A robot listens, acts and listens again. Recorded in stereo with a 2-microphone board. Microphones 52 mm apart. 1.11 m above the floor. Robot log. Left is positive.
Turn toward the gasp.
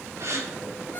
note: The gasp: about 70° right or 110° right.
cmd yaw -70
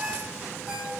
cmd idle
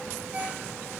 end: I heard a gasp, but can't make it out now. It was about straight ahead or 40° right.